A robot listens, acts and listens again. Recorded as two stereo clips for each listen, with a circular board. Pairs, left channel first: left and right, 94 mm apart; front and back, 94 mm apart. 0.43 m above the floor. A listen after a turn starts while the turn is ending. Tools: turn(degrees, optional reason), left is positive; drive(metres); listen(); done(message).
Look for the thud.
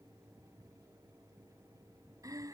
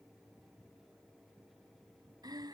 listen()
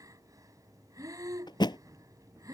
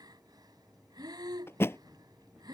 turn(degrees=60, reason="The thud: 60° left.")
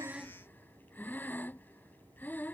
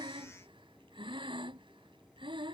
done("Facing where the thud came from. I can't hear it now.")